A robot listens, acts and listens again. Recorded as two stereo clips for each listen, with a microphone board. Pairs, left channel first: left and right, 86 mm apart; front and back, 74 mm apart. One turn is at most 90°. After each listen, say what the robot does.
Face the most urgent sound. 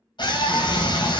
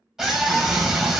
Turn 90° left.
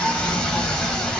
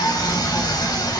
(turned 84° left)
Turn 15° left.
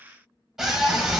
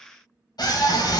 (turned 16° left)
Found it: a scream, straight ahead, 2 to 4 m away.